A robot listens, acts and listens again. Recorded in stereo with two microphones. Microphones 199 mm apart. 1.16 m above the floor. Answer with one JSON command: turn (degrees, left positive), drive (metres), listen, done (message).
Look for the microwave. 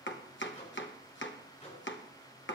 {"turn": 40}
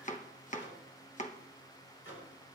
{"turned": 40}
{"turn": 100}
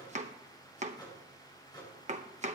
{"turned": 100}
{"turn": 20}
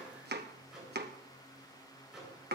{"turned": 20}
{"done": "Found it: a microwave, straight ahead."}